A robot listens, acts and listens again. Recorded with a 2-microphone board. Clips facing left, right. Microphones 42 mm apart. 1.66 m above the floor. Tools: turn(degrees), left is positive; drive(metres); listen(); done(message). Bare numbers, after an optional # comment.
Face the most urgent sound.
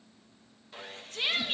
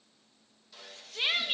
turn(-30)
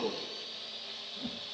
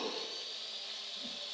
# So it is at 15° left.
turn(15)
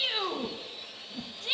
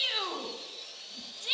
done("Found it: a shout, straight ahead.")